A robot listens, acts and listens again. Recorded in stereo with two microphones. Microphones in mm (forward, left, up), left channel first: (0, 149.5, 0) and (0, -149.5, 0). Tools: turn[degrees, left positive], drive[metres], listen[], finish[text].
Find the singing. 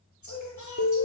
Thought: The singing: about 70° left or 110° left.
Action: turn[70]
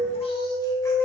Action: listen[]
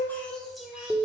Action: finish[Facing the singing.]